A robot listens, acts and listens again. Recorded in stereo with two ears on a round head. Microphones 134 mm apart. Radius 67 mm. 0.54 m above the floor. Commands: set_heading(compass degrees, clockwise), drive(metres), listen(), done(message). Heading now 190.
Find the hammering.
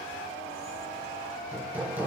set_heading(220)
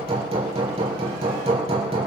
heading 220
set_heading(0)
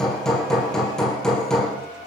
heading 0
done("Found it: hammering, straight ahead, over 4 m away.")